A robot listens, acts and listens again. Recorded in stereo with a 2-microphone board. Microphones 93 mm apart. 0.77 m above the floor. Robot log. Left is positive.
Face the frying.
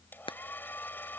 note: The frying: about 70° left or 110° left.
cmd yaw +70
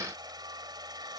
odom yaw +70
cmd idle
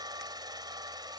cmd idle
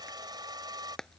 end: Found it: frying, straight ahead.